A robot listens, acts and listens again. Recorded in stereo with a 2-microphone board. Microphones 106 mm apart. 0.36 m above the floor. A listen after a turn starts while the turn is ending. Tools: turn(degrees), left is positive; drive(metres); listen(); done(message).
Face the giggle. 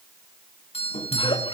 turn(degrees=55)
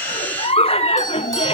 turn(degrees=70)
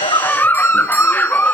turn(degrees=15)
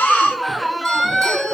done("Found it: a giggle, straight ahead, under 1 m away.")